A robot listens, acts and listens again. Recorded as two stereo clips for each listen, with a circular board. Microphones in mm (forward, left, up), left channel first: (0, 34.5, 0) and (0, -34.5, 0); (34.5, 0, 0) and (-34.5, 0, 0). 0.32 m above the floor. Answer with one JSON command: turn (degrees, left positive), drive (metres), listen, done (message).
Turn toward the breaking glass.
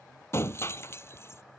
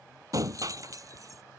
{"turn": 145}
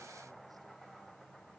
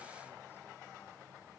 {"done": "I heard breaking glass from this way, but can't make it out now."}